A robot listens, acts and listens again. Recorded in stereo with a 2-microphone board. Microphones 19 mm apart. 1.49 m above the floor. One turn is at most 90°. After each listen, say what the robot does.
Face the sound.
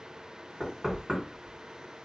Turn 25° right.
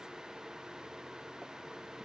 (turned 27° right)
Keep listening.
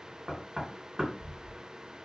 Turn 90° right.
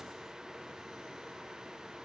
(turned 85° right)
Turn 45° right.
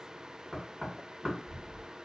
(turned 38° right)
Facing the knocking.